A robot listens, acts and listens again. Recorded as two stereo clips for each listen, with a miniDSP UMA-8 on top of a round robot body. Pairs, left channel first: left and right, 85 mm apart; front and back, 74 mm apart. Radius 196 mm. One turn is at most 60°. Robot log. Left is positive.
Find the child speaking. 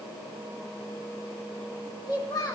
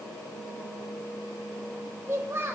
note: The child speaking: 125° left.
cmd yaw +60
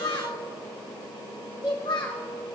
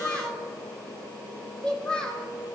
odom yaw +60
note: The child speaking is now 75° left.
cmd yaw +60
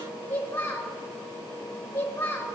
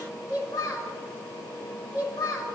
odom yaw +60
note: The child speaking is now 25° left.
cmd yaw +25
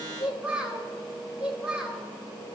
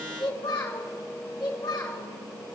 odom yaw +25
note: The child speaking is now 15° right.
cmd yaw -15
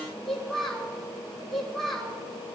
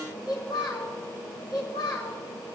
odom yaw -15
end: Found it: a child speaking, straight ahead, over 4 m away.